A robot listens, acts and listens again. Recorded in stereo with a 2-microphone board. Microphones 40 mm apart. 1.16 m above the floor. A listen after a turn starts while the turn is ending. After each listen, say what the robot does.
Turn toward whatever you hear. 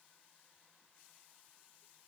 Keep listening.
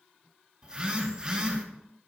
Turn 20° right.
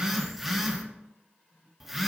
Facing the phone buzzing, under 1 m away.